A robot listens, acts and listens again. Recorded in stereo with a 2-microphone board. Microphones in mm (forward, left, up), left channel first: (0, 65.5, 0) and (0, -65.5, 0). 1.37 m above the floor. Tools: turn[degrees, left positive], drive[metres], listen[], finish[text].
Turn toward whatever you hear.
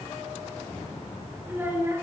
Thought: The child speaking: about 20° right or 160° right.
Action: turn[-20]
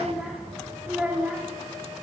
Action: turn[-30]
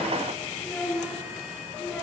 Thought: So it is at 10° left.
Action: turn[10]
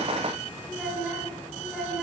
Action: finish[Found it: a child speaking, straight ahead.]